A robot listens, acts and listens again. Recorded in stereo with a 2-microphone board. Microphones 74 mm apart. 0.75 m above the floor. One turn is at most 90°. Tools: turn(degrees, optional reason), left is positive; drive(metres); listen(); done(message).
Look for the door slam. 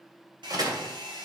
turn(degrees=-60, reason="The door slam: about 60° right or 120° right.")
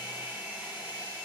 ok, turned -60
listen()
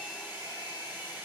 done("I heard a door slam, but can't make it out now. It was about straight ahead or 60° right.")